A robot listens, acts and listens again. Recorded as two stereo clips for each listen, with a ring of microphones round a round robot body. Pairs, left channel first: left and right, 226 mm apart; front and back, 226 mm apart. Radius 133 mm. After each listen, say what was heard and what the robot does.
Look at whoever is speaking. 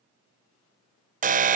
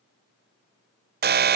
Keep listening.
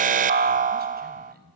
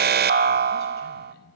The man speaking: 45° right. Turn 45° right.
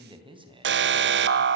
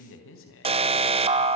The man speaking is now 25° right. Turn 25° right.
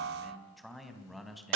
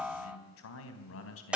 Facing the man speaking, 2 to 4 m away.